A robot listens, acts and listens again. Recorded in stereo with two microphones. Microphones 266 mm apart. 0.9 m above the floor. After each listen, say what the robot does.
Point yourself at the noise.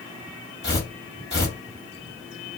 Turn 40° left.
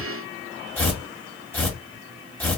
Facing the tearing paper, 1 to 2 m away.